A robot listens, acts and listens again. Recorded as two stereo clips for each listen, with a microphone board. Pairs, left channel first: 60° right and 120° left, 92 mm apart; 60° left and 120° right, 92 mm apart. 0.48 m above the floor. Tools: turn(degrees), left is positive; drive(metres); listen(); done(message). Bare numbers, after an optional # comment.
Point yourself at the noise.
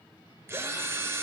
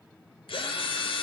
# The drill: 60° left.
turn(60)
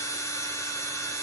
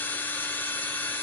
# The drill is now 10° right.
turn(-10)
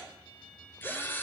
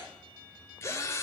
done("Found it: a drill, straight ahead.")